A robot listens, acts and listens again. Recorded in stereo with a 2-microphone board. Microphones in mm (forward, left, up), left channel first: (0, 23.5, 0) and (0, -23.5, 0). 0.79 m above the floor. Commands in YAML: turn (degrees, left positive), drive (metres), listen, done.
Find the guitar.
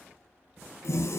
listen: true
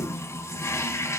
listen: true
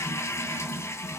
done: "I can't make out a guitar to turn to."